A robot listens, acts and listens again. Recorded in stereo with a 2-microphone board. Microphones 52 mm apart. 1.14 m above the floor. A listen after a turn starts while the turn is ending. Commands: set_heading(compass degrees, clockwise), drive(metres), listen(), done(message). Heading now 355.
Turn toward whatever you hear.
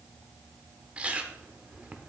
set_heading(20)
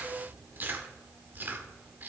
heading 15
set_heading(145)
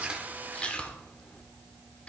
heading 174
set_heading(149)
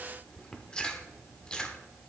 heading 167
set_heading(147)
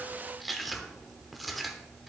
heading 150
done("Facing the chewing.")